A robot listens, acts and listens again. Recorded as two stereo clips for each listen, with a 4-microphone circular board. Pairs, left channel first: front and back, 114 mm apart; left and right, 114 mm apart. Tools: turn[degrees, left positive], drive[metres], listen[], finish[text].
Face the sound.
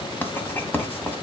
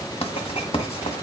Thought: The writing: 70° left.
Action: turn[70]
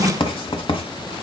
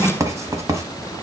Thought: The writing is now 30° right.
Action: turn[-30]
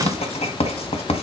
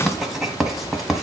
Action: finish[Facing the writing.]